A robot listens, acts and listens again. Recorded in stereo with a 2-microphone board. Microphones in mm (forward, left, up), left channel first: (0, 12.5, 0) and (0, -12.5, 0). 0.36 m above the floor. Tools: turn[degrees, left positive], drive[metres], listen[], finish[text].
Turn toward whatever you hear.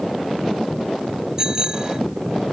Thought: The bicycle bell: about 20° right or 160° right.
Action: turn[-20]
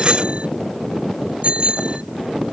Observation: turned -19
Thought: So it is at 140° right.
Action: turn[-140]
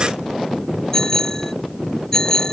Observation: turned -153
Thought: The bicycle bell is now 15° left.
Action: turn[15]
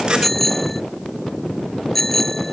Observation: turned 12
Action: finish[Found it: a bicycle bell, straight ahead.]